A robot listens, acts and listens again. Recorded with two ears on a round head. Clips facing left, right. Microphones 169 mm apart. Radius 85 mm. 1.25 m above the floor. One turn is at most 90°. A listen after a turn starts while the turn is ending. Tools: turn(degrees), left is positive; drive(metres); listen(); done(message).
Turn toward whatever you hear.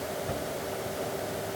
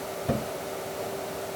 turn(degrees=-65)
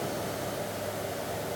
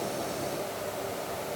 listen()
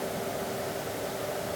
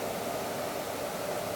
done("I heard a thud, but can't make it out now. It was about straight ahead or 50° right.")